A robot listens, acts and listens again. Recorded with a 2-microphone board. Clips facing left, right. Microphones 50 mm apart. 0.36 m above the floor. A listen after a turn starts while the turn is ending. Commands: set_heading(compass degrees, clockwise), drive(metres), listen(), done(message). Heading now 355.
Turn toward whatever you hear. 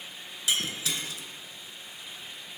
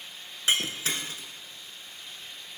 set_heading(35)
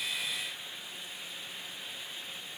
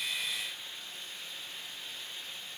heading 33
listen()
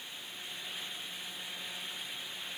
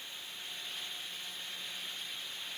done("I heard breaking glass, but can't make it out now. It was about straight ahead or 105° right.")